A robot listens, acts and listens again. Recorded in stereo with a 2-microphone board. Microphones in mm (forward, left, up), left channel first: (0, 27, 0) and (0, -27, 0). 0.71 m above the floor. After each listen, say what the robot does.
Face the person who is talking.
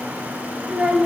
Turn 30° right.
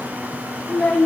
Turn 15° left.
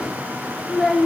Found it: a child speaking, straight ahead, 1 to 2 m away.